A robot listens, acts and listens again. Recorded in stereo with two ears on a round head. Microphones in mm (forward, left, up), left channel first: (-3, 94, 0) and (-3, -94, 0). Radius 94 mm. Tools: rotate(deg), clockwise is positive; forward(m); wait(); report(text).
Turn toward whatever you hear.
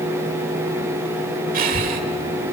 rotate(45)
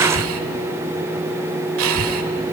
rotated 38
rotate(95)
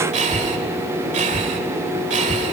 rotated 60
rotate(35)
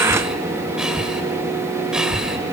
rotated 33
report("Found it: breathing, straight ahead.")